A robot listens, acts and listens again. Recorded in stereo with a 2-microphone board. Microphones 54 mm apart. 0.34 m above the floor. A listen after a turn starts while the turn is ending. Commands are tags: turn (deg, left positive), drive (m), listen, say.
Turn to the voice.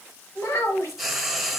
<turn deg="60"/>
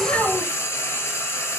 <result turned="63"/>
<listen/>
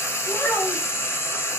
<turn deg="45"/>
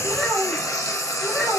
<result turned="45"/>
<say>Found it: a child speaking, straight ahead, 2 to 4 m away.</say>